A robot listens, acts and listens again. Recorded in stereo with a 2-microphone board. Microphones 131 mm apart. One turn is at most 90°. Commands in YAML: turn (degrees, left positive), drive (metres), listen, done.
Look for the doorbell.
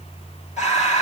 listen: true
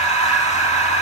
listen: true
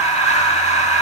done: "I can't make out a doorbell, only breathing."